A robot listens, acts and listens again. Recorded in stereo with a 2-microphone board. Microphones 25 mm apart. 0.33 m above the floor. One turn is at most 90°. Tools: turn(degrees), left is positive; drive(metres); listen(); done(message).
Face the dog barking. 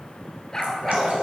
turn(degrees=25)
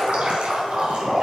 listen()
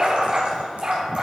turn(degrees=-35)
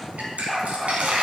done("Facing the dog barking, 2 to 4 m away.")